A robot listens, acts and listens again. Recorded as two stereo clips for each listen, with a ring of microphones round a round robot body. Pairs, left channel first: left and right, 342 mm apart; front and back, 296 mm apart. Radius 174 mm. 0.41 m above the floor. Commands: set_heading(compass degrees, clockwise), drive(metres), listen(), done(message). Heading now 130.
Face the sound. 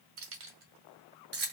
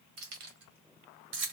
set_heading(280)
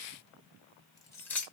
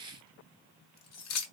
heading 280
done("Facing the keys jangling.")